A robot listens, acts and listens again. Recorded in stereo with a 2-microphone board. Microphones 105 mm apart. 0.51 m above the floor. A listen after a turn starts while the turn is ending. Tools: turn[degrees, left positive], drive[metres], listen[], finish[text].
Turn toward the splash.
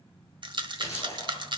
Thought: The splash: about 30° left or 150° left.
Action: turn[30]
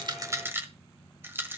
Action: listen[]
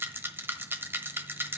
Action: finish[I heard a splash, but can't make it out now. It was about straight ahead or 120° left.]